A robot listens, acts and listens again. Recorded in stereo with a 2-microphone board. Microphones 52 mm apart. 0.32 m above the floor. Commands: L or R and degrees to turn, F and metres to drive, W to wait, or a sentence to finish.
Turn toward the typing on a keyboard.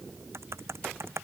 R65
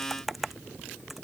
Facing the typing on a keyboard.